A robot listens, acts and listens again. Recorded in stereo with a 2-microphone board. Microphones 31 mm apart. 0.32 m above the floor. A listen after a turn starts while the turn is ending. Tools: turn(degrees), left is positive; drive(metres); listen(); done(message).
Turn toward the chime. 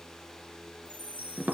turn(degrees=-65)
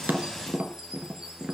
listen()
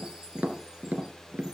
listen()
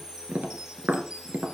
turn(degrees=-20)
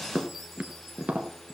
listen()
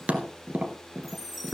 done("Found it: a chime, straight ahead.")